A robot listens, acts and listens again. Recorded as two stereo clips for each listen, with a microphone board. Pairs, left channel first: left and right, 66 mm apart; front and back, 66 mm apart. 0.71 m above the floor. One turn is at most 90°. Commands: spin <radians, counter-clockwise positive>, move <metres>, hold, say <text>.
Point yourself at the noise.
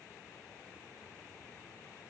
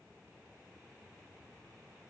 hold
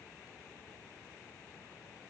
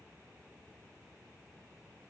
hold
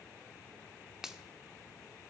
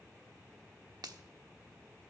spin -1.57
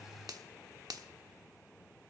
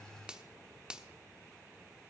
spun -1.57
spin -1.57
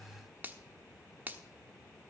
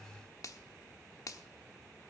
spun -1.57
spin -0.52
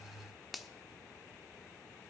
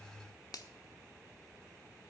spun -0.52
say Facing the finger snap.